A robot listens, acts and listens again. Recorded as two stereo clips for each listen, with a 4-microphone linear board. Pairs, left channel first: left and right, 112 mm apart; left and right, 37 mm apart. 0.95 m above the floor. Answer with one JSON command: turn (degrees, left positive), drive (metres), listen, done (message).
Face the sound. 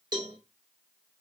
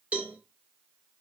{"turn": -35}
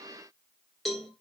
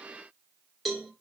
{"done": "Found it: a cowbell, straight ahead, 2 to 4 m away."}